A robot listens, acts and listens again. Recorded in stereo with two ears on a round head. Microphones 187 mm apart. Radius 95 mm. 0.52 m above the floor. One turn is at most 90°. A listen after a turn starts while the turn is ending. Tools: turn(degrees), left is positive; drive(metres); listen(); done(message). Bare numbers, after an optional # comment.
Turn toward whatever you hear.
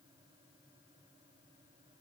listen()
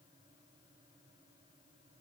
listen()
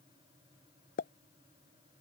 # The pop: about 40° left or 140° left.
turn(40)
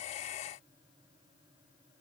listen()
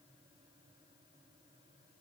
done("I heard a pop, but can't make it out now. It was about straight ahead or 100° left.")